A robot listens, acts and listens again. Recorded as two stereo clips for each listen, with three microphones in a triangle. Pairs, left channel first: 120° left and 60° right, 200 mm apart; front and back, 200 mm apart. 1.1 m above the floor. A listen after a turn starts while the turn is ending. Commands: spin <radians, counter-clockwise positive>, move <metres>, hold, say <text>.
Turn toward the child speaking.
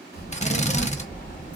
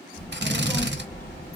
spin 1.22
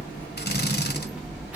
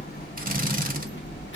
spin 0.44
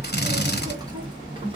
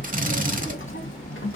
say Facing the child speaking.